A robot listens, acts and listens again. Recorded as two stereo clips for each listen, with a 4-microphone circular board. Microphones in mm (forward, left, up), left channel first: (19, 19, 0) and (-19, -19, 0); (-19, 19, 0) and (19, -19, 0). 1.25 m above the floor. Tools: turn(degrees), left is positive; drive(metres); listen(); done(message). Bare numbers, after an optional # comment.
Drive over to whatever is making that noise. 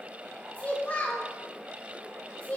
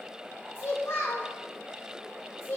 # The child speaking: 110° left.
turn(110)
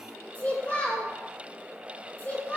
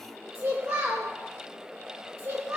# The child speaking is now 10° right.
turn(-10)
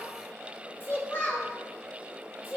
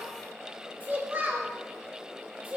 drive(1.0)
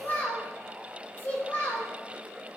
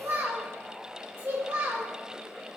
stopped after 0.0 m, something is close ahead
done("Something is in my way. I am facing the child speaking but have not reached it.")